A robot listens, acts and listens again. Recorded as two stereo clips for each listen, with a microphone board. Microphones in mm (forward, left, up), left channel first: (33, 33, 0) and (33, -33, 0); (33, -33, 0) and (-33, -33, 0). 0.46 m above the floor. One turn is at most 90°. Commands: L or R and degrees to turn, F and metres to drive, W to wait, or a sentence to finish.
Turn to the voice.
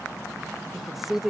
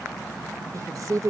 R90
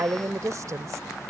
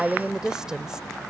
R90
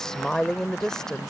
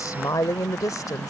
L10
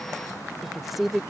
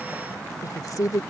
Found it: a woman speaking, straight ahead.